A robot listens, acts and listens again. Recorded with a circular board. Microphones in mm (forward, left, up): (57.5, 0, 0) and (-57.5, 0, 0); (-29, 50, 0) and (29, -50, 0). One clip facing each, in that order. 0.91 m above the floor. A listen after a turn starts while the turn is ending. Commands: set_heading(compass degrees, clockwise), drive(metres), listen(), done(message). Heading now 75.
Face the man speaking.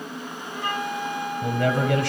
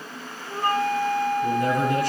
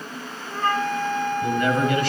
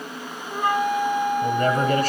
set_heading(85)
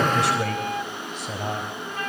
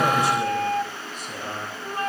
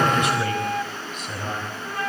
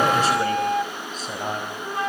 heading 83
done("Found it: a man speaking, straight ahead, over 4 m away.")